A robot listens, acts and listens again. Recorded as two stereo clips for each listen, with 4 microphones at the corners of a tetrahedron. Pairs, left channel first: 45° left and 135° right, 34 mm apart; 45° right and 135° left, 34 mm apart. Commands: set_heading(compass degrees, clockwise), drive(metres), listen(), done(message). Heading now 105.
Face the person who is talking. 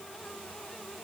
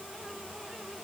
listen()
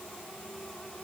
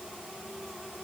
listen()
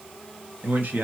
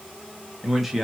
set_heading(240)
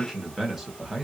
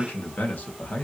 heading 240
set_heading(290)
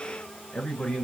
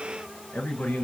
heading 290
set_heading(300)
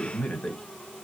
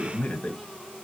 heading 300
done("Facing the man speaking.")